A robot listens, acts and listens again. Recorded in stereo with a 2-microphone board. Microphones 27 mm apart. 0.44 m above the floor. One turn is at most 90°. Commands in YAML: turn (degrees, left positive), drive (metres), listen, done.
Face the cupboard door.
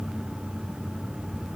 listen: true
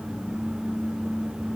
listen: true
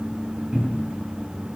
turn: -55
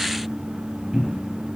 done: "Found it: a cupboard door, straight ahead, 2 to 4 m away."